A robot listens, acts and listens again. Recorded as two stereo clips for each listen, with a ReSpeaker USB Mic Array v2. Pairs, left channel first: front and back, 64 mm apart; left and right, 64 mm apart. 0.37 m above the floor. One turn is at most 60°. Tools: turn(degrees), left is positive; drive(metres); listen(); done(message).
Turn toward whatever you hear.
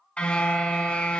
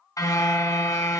turn(degrees=60)
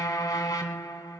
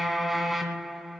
done("Facing the car horn, 2 to 4 m away.")